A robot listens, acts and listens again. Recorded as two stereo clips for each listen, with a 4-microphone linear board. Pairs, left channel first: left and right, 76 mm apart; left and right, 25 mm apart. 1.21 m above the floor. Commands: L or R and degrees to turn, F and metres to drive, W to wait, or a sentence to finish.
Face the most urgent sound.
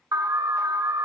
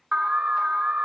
R55
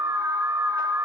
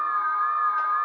R55
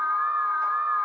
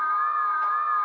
R20
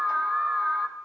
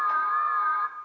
Facing the alarm, under 1 m away.